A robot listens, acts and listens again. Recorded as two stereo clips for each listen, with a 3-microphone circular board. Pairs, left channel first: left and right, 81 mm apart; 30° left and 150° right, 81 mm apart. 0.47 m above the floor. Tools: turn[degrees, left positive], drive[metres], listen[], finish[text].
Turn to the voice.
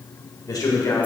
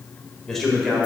Thought: The man speaking: 125° left.
Action: turn[125]
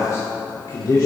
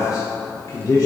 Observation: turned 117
Thought: The man speaking is now 65° left.
Action: turn[65]
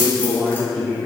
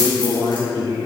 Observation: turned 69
Thought: The man speaking is now 15° left.
Action: turn[15]
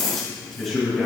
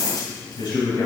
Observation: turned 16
Action: finish[Facing the man speaking, 2 to 4 m away.]